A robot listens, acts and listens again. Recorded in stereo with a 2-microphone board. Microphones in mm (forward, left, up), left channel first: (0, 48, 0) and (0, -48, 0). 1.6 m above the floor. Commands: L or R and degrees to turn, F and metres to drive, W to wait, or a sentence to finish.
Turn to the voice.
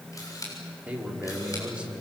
R30
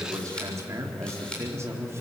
R150
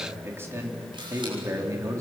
R30
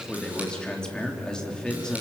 L10
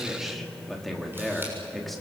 Found it: a man speaking, straight ahead.